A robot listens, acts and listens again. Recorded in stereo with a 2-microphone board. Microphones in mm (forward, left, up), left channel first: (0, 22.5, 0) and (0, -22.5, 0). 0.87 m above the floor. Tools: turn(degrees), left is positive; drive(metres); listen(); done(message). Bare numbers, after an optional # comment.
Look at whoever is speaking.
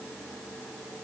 listen()
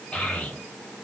# The child speaking: about 20° left or 160° left.
turn(20)
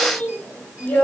# So it is at 140° left.
turn(140)
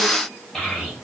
# The child speaking is now 15° left.
turn(15)
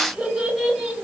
done("Facing the child speaking.")